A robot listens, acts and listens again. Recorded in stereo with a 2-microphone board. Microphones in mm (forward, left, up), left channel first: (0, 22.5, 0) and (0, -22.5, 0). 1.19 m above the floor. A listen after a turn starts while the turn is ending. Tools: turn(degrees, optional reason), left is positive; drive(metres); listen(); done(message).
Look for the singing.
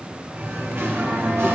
turn(degrees=-70, reason="The singing: about 70° right or 110° right.")
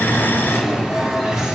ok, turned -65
turn(degrees=-15, reason="So it is at 15° right.")
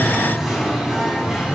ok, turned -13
turn(degrees=-10, reason="The singing is now 10° right.")
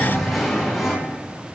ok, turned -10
done("Found it: singing, straight ahead, over 4 m away.")